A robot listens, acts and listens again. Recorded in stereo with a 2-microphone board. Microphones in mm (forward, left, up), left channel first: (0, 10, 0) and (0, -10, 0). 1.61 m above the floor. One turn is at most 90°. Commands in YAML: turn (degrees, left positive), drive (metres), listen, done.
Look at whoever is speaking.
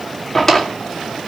listen: true
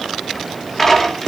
listen: true
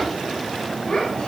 turn: 60
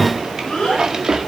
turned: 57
turn: 60
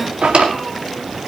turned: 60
listen: true
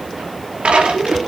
done: "Found it: a child speaking, straight ahead."